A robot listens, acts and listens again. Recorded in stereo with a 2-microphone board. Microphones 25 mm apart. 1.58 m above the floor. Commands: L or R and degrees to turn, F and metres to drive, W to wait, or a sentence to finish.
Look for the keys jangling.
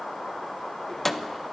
L30
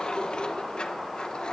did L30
L135
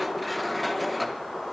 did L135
Found it: keys jangling, straight ahead.